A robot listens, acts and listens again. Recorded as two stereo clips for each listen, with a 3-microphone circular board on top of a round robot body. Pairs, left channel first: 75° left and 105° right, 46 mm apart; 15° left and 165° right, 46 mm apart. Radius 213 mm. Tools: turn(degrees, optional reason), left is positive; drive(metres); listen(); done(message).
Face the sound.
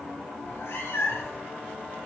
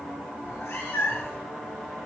turn(degrees=45, reason="The cat meowing: 45° left.")
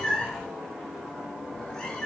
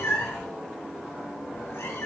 done("Found it: a cat meowing, straight ahead, 2 to 4 m away.")